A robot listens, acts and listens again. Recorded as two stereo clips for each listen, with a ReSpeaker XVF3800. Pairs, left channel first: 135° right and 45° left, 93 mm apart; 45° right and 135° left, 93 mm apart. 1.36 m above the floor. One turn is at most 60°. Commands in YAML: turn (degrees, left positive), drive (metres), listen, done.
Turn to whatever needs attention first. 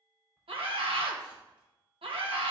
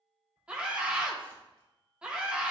turn: 55
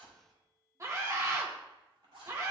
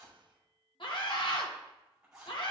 turn: -15
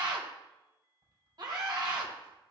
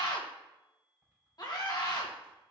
done: "Facing the scream, 1 to 2 m away."